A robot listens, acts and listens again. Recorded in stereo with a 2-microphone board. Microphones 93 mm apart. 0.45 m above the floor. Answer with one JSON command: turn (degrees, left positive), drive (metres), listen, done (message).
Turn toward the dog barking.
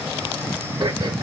{"listen": true}
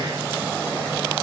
{"listen": true}
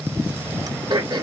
{"done": "I can't make out a dog barking to turn to."}